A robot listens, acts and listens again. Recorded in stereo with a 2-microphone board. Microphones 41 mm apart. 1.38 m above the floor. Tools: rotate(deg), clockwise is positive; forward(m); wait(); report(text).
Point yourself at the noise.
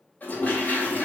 rotate(-45)
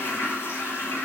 rotate(-90)
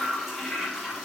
report("Facing the toilet flushing, 2 to 4 m away.")